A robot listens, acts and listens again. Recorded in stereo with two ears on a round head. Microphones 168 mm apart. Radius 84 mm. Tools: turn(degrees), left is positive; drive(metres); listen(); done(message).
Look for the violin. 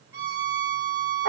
turn(degrees=-15)
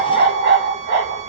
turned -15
listen()
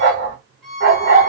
done("Facing the violin, under 1 m away.")